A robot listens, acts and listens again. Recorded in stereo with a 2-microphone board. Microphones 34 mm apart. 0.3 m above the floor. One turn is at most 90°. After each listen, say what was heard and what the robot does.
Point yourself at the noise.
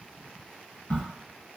The crack: about 60° left or 120° left. Turn 60° left.
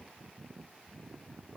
Keep listening.
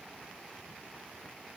I heard a crack, but can't make it out now. It was about straight ahead or 60° left.